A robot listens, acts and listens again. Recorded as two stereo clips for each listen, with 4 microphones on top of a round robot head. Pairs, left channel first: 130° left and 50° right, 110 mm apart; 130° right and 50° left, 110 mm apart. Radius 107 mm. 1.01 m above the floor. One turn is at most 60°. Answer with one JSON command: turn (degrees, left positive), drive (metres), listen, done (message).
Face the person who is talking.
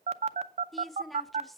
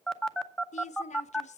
{"turn": -60}
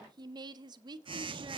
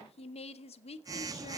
{"turn": -60}
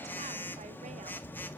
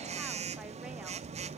{"turn": -40}
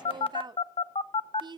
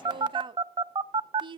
{"done": "Facing the woman speaking, under 1 m away."}